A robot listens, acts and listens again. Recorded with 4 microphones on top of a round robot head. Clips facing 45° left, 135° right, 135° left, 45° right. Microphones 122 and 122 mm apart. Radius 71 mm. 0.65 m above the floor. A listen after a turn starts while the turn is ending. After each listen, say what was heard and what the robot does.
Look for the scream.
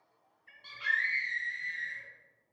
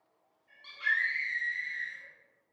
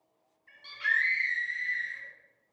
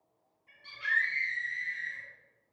The scream: 130° left. Turn 130° left.
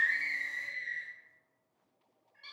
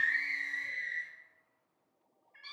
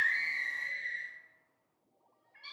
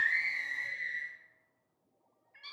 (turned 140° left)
The scream is now 10° right. Turn 10° right.
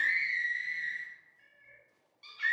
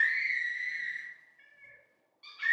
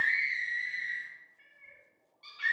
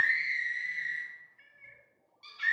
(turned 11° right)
Facing the scream.